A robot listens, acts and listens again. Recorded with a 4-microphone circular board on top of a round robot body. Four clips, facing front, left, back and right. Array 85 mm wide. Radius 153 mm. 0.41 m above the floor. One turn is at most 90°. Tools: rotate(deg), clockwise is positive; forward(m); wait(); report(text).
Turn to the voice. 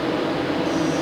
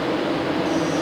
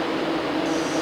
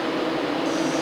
wait()
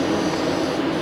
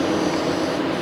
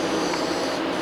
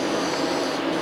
wait()
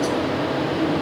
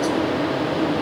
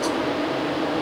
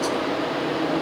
report("I can't make out anyone speaking.")